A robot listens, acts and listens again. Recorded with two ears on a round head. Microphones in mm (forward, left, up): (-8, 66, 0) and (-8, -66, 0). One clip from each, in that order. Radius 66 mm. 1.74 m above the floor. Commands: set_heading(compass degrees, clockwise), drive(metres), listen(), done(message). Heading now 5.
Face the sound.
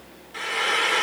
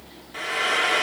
set_heading(35)
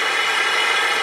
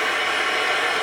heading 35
set_heading(15)
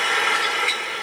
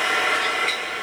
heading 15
done("Facing the frying, 2 to 4 m away.")